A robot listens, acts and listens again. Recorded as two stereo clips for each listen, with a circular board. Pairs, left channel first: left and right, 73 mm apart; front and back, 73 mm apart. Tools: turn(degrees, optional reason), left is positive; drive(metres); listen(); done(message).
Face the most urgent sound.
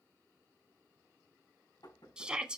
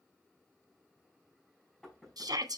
turn(degrees=-165, reason="The shout: 165° right.")
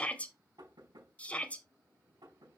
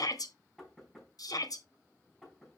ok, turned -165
turn(degrees=20, reason="The shout is now 20° left.")
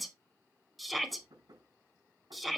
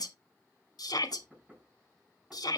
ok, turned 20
done("Facing the shout, 1 to 2 m away.")